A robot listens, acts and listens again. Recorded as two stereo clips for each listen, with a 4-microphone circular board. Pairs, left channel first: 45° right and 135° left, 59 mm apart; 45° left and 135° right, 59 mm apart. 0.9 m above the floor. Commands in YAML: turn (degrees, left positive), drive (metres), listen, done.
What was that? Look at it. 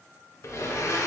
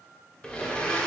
turn: -30
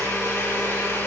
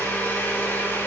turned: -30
done: "Found it: a blender, straight ahead, under 1 m away."